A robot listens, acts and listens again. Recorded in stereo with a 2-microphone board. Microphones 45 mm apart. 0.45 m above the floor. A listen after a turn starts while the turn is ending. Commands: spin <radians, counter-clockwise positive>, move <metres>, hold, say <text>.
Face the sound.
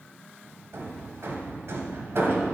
spin -1.22
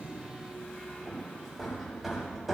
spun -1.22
say Facing the hammering, 1 to 2 m away.